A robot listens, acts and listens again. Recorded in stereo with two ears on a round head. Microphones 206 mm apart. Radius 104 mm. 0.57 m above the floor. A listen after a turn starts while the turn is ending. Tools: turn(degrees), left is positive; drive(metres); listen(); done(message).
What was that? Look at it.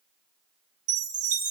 turn(degrees=-35)
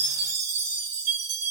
turn(degrees=-105)
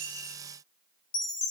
turn(degrees=25)
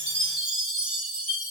done("Facing the chime, 1 to 2 m away.")